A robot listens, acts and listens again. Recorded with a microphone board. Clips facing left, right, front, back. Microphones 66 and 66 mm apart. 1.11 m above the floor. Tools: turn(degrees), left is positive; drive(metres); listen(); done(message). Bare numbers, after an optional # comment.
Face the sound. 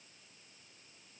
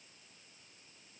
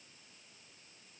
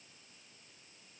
listen()
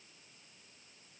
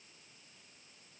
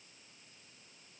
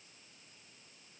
listen()
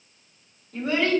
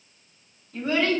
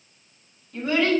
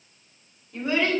# The child speaking: 105° left.
turn(105)
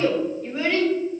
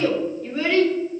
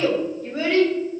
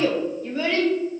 # The child speaking is now 15° left.
turn(15)
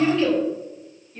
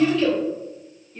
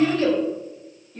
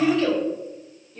done("Found it: a child speaking, straight ahead.")